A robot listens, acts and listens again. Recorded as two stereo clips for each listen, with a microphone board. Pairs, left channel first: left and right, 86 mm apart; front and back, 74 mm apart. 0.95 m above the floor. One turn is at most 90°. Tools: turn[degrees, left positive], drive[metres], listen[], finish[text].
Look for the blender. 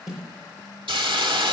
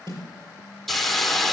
Action: listen[]
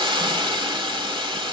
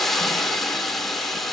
Action: listen[]
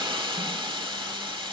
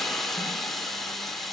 Action: finish[I can't make out a blender to turn to.]